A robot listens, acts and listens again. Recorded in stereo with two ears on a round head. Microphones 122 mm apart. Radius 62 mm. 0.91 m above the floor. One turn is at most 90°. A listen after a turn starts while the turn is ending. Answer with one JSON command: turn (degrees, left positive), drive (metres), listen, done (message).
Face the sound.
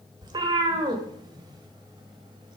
{"turn": -35}
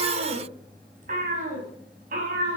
{"turn": -90}
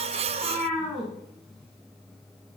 {"done": "Found it: a cat meowing, straight ahead."}